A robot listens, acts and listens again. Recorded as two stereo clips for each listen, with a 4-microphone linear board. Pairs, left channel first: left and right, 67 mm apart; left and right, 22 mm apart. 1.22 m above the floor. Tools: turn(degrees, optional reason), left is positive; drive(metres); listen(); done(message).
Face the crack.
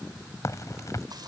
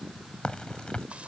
turn(degrees=50, reason="The crack: about 50° left or 130° left.")
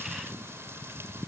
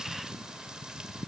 listen()
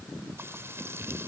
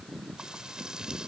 done("I heard a crack, but can't make it out now. It was about straight ahead or 80° left.")